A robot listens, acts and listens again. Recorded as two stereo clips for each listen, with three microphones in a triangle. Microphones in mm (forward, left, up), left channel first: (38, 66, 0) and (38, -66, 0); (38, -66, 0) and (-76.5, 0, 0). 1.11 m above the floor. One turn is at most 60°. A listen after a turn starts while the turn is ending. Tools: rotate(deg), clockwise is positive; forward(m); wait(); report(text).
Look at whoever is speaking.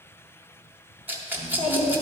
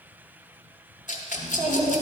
rotate(-60)
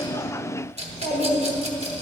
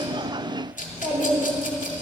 rotate(-60)
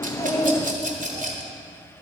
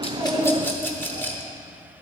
rotate(-25)
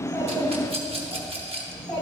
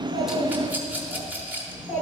report("Facing the child speaking.")